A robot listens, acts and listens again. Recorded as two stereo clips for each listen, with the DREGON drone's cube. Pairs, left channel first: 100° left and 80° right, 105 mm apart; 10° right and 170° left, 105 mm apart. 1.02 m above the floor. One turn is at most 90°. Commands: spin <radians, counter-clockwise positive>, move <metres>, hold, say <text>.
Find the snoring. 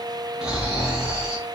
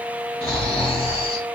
say Facing the snoring, 1 to 2 m away.